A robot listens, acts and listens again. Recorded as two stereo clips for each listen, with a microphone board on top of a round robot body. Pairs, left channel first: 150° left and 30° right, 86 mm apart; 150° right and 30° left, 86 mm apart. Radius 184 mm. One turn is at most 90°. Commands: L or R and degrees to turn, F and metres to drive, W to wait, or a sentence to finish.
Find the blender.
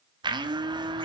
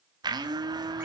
Facing the blender, 1 to 2 m away.